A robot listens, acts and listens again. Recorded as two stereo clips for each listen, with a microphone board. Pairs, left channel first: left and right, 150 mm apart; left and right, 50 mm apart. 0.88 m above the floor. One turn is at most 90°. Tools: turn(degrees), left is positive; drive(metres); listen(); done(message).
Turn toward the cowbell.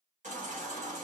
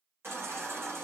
listen()
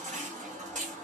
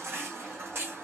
listen()
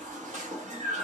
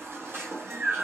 done("I can't make out a cowbell, only a baby crying.")